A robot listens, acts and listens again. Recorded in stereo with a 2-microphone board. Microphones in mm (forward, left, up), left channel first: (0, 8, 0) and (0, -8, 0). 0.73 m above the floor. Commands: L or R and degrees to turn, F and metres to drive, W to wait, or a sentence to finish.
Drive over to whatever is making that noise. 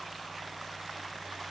W
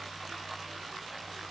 W
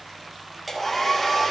L30
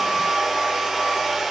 R25
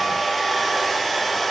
F1.0
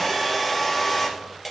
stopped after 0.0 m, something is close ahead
Something is in my way. I am facing the hair dryer but have not reached it.